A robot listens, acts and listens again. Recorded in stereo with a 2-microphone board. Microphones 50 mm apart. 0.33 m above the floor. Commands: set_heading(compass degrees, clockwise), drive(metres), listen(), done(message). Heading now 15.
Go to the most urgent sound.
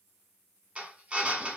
listen()
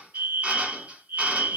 set_heading(70)
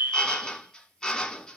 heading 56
set_heading(111)
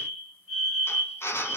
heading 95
set_heading(110)
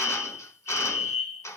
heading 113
drive(1.0)
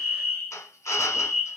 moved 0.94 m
drive(1.0)
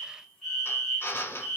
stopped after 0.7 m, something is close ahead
done("I am next to the fire alarm.")